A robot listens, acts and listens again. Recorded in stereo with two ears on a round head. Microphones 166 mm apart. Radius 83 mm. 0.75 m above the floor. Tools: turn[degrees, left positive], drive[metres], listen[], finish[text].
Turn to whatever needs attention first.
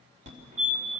Thought: The fire alarm: about 40° right or 140° right.
Action: turn[-40]
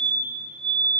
Thought: So it is at 95° right.
Action: turn[-95]
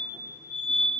Thought: The fire alarm is now 10° left.
Action: turn[10]
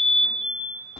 Action: finish[Found it: a fire alarm, straight ahead.]